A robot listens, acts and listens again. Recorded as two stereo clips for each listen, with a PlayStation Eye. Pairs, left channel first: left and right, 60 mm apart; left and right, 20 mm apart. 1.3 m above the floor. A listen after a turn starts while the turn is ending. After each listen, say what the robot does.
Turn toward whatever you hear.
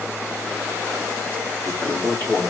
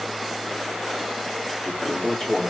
Turn 35° left.
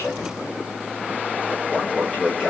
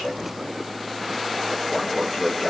Found it: a toilet flushing, straight ahead.